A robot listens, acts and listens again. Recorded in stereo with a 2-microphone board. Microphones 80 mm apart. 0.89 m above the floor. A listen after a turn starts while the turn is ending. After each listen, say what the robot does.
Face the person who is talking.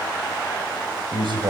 Turn 90° right.
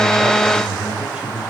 Turn 10° right.
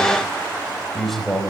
Facing the man speaking, over 4 m away.